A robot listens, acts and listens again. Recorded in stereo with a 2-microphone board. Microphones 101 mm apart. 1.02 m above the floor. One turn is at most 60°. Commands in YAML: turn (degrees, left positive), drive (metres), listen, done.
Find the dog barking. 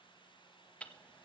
listen: true
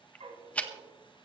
turn: -60
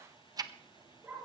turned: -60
turn: -20
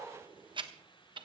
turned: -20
done: "Facing the dog barking."